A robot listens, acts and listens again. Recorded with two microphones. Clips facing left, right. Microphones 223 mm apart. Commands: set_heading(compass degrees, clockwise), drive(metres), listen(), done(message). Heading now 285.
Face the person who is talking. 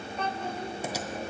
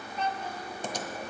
set_heading(230)
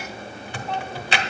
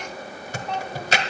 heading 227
done("Found it: a child speaking, straight ahead.")